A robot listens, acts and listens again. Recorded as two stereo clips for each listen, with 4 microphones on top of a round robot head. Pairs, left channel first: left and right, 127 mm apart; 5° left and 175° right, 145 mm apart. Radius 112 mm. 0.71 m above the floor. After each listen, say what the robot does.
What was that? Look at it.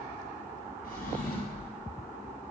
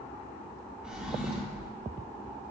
Turn 100° left.
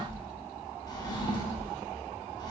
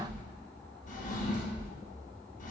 Turn 35° left.
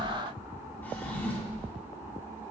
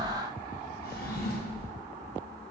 Turn 15° left.
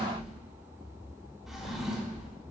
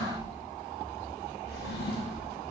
Found it: a drawer, straight ahead.